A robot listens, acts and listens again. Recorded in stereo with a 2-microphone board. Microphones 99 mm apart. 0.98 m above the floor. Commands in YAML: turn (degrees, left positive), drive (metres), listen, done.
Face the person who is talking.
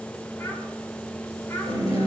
turn: 25
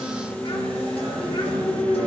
listen: true
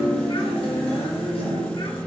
listen: true
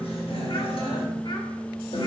done: "I heard a child speaking, but can't make it out now. It was about straight ahead or 130° left."